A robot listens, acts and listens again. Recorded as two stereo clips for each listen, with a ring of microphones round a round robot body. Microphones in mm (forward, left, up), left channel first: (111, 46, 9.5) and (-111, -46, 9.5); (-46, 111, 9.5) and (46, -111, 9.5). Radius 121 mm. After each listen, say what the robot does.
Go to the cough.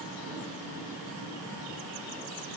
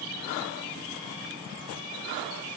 Keep listening.
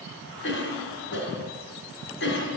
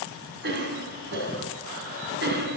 Turn 20° right.
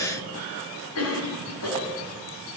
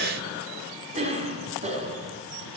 Drive 1.0 m forward.
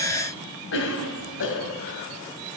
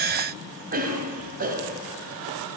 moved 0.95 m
Turn 15° right.
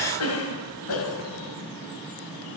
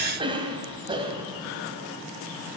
Drive 1.0 m forward.
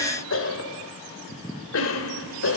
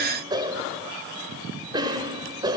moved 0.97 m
Drive 1.0 m forward.
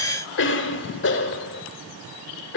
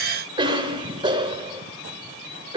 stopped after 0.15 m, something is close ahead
Arrived at the cough, straight ahead.